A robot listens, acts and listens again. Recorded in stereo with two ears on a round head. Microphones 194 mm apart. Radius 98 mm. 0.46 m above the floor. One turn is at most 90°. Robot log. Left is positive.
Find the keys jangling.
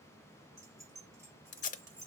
cmd yaw -30
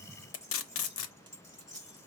note: So it is at 15° left.
cmd yaw +15
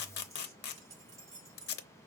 end: Facing the keys jangling, over 4 m away.